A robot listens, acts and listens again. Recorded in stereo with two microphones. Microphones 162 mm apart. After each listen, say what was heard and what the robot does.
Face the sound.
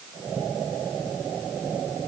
Keep listening.
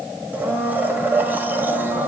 Turn 30° right.
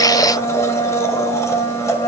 So it is at 20° left. Turn 20° left.
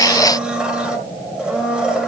Found it: a blender, straight ahead.